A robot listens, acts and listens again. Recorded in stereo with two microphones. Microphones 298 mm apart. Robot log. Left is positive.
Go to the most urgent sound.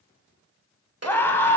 cmd yaw +30
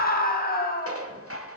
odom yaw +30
note: So it is at 145° left.
cmd yaw +145
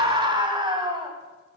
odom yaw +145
note: The scream is now 20° right.
cmd yaw -20
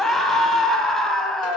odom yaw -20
cmd fwd 1.0
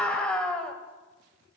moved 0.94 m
cmd fwd 1.0
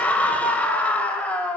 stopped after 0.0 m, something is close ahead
end: I am next to the scream.